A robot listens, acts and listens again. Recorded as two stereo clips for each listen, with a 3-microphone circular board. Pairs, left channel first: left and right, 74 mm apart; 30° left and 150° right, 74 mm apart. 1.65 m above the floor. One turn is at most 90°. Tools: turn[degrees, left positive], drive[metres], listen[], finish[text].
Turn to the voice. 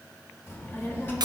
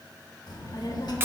Thought: The child speaking: 30° left.
Action: turn[30]
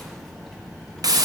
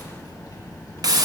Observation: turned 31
Action: finish[Found it: a child speaking, straight ahead.]